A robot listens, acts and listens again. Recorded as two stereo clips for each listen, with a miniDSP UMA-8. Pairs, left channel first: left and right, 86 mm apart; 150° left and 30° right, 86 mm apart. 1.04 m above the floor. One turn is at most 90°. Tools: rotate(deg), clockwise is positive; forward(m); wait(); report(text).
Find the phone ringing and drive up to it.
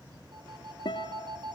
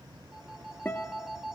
rotate(90)
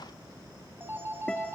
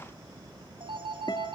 rotate(25)
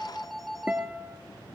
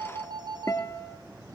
forward(1.0)
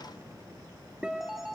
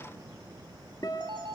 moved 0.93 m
forward(1.0)
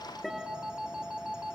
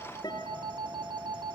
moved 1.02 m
rotate(10)
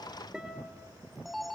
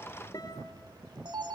forward(1.0)
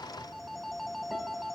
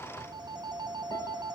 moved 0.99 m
forward(1.0)
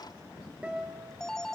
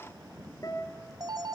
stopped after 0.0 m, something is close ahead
report("Arrived at the phone ringing, straight ahead.")